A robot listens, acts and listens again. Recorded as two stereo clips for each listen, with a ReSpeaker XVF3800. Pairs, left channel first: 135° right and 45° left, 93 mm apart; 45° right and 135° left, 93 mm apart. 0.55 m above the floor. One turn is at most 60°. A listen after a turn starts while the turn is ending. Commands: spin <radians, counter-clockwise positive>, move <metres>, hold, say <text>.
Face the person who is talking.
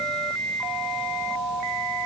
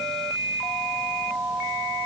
hold
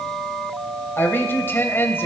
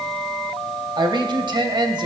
spin 1.05
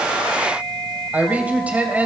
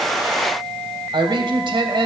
spin 1.05
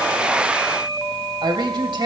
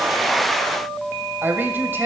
spin 1.05
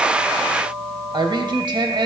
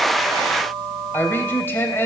spin 0.35
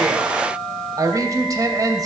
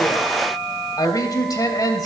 say Found it: a woman speaking, straight ahead, 2 to 4 m away.